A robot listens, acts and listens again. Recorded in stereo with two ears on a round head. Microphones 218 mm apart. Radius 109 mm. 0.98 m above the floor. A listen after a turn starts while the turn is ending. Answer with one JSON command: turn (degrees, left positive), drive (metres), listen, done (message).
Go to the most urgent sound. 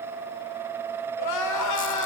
{"turn": 90}
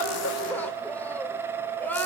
{"drive": 1.0}
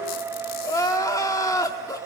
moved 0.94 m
{"turn": 15}
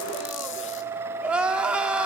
{"drive": 1.0}
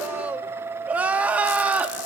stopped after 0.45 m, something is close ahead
{"done": "I am next to the crying."}